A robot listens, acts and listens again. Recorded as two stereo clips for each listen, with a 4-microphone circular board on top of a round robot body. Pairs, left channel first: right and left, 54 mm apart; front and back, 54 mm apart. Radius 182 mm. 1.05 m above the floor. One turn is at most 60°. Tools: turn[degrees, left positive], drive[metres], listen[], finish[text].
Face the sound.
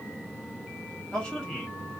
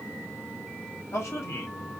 Thought: The man speaking: 10° right.
Action: turn[-10]
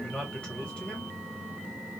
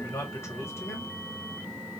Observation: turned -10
Thought: The man speaking is now 10° right.
Action: turn[-10]
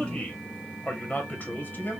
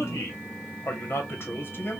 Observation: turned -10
Thought: The man speaking is now 40° right.
Action: turn[-40]
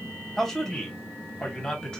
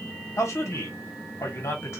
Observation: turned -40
Thought: The man speaking is now 15° right.
Action: turn[-15]
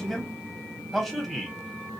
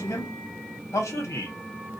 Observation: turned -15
Action: finish[Facing the man speaking, 1 to 2 m away.]